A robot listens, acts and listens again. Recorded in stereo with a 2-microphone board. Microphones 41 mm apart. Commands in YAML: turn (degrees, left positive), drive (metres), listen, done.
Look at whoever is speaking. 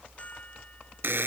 listen: true
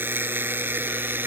listen: true
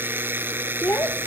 turn: 70
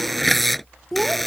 done: "Facing the child speaking."